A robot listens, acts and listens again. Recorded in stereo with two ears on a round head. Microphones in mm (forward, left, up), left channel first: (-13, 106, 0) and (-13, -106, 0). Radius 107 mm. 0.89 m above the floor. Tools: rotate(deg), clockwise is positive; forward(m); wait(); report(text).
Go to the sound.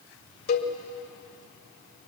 rotate(-40)
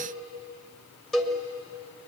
forward(1.0)
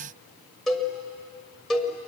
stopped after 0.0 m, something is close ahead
report("Blocked. The cowbell is further on, straight ahead.")